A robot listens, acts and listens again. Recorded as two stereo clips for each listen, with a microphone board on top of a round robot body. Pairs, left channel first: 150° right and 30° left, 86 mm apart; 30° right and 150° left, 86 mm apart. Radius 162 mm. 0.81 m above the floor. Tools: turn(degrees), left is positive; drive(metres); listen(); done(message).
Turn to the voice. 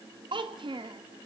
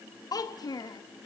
turn(degrees=10)
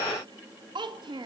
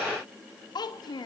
done("Found it: a child speaking, straight ahead.")